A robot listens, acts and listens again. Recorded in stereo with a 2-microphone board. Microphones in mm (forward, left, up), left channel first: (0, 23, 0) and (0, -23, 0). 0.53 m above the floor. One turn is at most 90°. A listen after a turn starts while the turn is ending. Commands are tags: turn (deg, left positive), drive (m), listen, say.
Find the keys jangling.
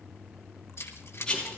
<turn deg="65"/>
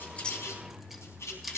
<say>Facing the keys jangling, 2 to 4 m away.</say>